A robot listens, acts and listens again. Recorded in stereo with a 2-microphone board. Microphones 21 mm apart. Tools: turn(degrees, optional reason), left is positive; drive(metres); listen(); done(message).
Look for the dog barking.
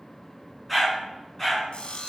turn(degrees=15, reason="The dog barking: about 15° left or 165° left.")
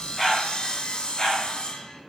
turn(degrees=30, reason="The dog barking: about 30° left or 150° left.")
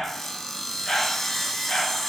turn(degrees=25, reason="The dog barking: about 25° left or 155° left.")
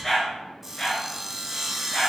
turn(degrees=30)
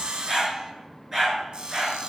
turn(degrees=-25, reason="So it is at 25° right.")
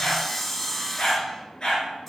turn(degrees=30, reason="The dog barking is now 30° left.")
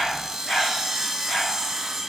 done("Found it: a dog barking, straight ahead.")